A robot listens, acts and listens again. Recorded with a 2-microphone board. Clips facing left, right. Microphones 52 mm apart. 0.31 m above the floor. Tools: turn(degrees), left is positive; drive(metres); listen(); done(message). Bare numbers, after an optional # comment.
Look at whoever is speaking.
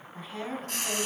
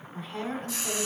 turn(30)
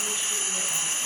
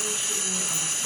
listen()
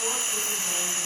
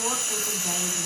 listen()
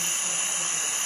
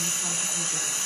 done("I heard a woman speaking, but can't make it out now. It was about 25° right or 145° left.")